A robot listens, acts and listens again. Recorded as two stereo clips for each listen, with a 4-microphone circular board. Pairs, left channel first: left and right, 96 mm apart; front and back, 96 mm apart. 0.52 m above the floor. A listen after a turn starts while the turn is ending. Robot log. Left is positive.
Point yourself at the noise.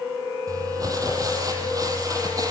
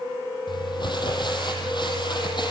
note: The crumpling: 40° right.
cmd yaw -40
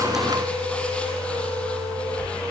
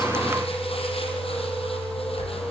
note: The crumpling is now 10° left.
cmd yaw +10
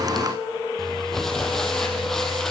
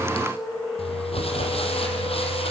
end: Found it: crumpling, straight ahead.